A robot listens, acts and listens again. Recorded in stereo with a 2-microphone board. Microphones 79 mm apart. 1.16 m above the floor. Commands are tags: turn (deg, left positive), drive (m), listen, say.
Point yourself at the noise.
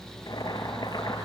<turn deg="70"/>
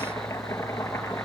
<turn deg="40"/>
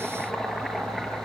<say>Facing the boiling, over 4 m away.</say>